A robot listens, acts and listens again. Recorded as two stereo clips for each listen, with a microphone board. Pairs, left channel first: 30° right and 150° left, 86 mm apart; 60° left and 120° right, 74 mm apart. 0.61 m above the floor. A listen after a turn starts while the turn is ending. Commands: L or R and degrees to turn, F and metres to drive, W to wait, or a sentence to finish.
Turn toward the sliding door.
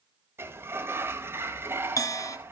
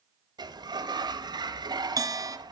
R145
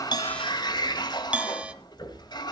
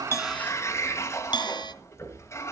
Facing the sliding door.